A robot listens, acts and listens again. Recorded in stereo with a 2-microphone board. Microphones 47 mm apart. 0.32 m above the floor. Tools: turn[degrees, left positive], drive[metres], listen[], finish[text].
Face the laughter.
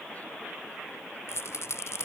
Action: listen[]
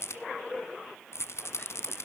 Action: listen[]
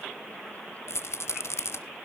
Action: finish[I can't make out laughter to turn to.]